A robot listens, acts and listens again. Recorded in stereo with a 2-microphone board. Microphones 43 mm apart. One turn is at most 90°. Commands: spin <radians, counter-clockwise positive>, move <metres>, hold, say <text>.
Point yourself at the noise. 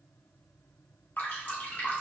spin 0.70
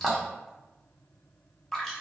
say Facing the dripping, under 1 m away.